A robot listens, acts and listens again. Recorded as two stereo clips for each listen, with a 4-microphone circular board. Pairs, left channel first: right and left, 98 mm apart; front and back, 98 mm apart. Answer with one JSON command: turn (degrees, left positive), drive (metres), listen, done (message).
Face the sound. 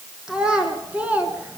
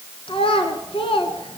{"turn": 15}
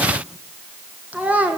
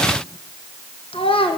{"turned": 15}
{"turn": 15}
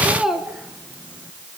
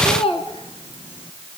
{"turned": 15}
{"done": "Facing the child speaking, 2 to 4 m away."}